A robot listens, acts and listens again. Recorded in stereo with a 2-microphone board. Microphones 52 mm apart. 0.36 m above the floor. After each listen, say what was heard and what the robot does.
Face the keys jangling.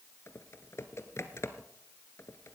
Keep listening.
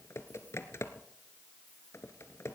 Keep listening.
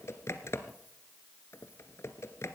I can't make out keys jangling to turn to.